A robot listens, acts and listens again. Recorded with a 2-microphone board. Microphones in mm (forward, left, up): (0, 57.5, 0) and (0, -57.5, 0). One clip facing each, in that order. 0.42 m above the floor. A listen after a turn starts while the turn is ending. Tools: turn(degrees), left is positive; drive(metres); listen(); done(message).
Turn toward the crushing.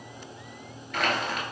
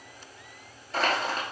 turn(degrees=-30)
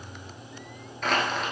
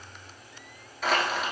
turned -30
done("Found it: crushing, straight ahead, 1 to 2 m away.")